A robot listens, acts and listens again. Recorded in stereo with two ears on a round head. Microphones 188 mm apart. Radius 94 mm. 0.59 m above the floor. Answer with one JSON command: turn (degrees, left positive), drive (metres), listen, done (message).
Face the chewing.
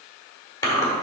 {"turn": 15}
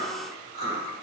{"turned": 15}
{"turn": 150}
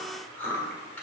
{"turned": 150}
{"turn": 10}
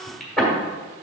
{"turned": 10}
{"done": "Found it: chewing, straight ahead, 1 to 2 m away."}